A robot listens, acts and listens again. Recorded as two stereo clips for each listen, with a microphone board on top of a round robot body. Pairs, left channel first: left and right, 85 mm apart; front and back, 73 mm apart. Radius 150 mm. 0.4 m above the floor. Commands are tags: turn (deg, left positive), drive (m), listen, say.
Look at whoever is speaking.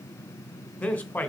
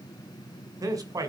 <turn deg="160"/>
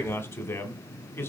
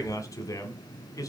<turn deg="35"/>
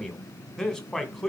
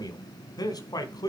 <turn deg="10"/>
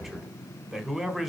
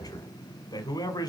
<say>Facing the man speaking, 2 to 4 m away.</say>